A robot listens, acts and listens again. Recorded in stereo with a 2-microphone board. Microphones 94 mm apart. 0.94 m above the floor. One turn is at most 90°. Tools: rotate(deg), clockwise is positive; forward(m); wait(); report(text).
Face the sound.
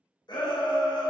rotate(-50)
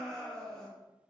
report("Found it: a shout, straight ahead, under 1 m away.")